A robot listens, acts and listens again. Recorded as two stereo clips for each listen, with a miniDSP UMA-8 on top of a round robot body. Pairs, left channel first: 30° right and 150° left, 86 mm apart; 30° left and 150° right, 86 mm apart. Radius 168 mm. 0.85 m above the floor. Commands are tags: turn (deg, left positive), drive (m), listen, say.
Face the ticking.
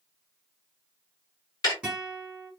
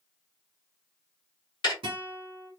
<say>Facing the ticking, 1 to 2 m away.</say>